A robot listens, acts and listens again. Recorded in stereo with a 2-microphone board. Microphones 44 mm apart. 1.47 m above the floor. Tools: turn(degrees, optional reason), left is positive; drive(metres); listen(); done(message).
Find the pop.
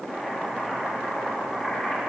listen()
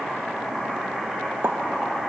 turn(degrees=-60, reason="The pop: about 60° right or 120° right.")
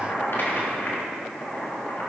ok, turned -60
listen()
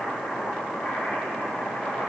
done("I heard a pop, but can't make it out now. It was about straight ahead or 60° right.")